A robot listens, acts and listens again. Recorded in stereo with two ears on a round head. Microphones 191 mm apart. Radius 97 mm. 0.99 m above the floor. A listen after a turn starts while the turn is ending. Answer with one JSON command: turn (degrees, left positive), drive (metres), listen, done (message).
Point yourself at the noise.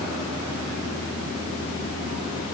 {"listen": true}
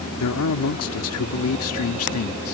{"turn": 70}
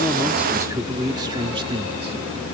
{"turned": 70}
{"turn": -25}
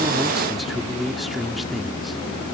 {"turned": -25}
{"done": "Found it: a man speaking, straight ahead."}